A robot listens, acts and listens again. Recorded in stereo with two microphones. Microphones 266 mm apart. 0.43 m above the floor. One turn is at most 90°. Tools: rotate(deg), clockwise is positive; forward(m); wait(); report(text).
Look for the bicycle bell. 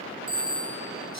rotate(-30)
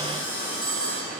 wait()
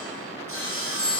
rotate(15)
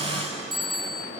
report("Found it: a bicycle bell, straight ahead, over 4 m away.")